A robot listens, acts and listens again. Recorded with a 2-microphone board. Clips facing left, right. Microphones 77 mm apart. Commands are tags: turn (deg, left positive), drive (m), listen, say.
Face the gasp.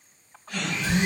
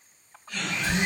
<turn deg="90"/>
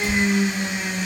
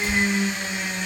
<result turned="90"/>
<say>Facing where the gasp came from. I can't hear it now.</say>